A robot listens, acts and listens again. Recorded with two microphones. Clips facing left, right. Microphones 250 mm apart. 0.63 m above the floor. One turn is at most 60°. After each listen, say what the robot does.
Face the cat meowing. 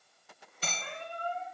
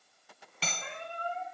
Turn 20° right.
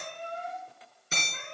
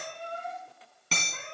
Turn 30° right.
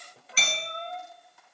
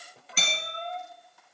Turn 20° left.
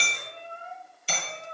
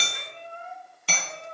Found it: a cat meowing, straight ahead.